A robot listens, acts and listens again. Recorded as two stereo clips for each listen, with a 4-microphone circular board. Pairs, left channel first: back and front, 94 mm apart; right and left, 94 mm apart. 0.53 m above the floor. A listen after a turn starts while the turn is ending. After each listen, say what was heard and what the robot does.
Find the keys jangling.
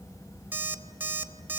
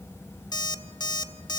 Keep listening.
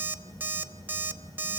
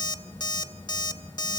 Keep listening.
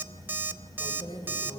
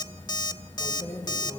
The keys jangling: 145° right. Turn 145° right.
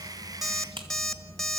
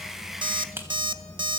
The keys jangling is now 25° left. Turn 25° left.
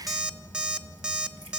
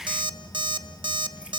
Keep listening.
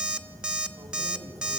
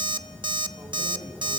Keep listening.
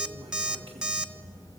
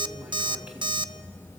I heard keys jangling from this way, but can't make it out now.